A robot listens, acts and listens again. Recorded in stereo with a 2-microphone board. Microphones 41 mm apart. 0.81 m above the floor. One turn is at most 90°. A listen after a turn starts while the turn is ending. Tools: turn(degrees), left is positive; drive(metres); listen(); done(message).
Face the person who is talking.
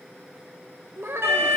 turn(degrees=-90)
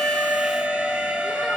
listen()
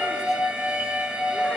listen()
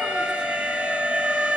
done("Facing where the child speaking came from. I can't hear it now.")